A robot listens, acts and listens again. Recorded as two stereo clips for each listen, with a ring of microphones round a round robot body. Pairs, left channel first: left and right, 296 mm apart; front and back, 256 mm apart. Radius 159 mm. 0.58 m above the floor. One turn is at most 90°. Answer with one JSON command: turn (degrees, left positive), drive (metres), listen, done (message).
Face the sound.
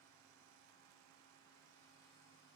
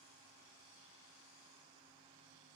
{"listen": true}
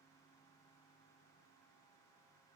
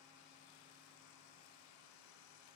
{"listen": true}
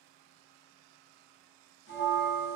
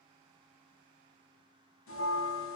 {"turn": 35}
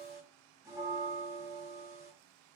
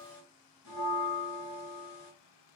{"turn": -10}
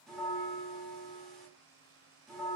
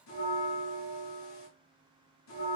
{"done": "Facing the bell."}